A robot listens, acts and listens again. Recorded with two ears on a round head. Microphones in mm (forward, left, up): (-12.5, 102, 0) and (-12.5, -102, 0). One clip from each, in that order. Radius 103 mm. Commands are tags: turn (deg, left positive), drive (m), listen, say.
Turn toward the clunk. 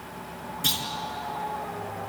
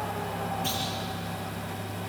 <turn deg="75"/>
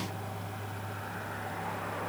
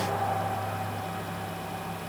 <listen/>
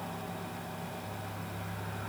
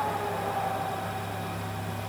<say>I heard a clunk, but can't make it out now. It was about straight ahead or 30° left.</say>